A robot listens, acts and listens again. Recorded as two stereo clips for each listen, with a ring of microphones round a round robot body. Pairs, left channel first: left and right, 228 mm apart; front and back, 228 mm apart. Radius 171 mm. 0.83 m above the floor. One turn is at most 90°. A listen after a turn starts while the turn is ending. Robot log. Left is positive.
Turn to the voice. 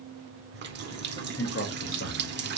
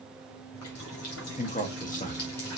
note: The man speaking: 60° left.
cmd yaw +60
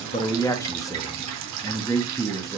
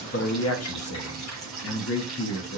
note: The man speaking is now 15° left.
cmd yaw +15
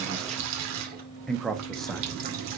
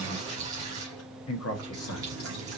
end: Facing the man speaking, 1 to 2 m away.